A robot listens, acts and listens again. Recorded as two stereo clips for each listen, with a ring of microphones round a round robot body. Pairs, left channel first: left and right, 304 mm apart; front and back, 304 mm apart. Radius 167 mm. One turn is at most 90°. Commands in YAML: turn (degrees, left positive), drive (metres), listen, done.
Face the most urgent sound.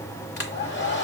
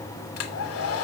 listen: true
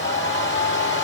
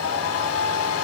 listen: true
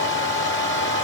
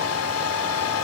done: "I can't make out anything urgent, only a hair dryer."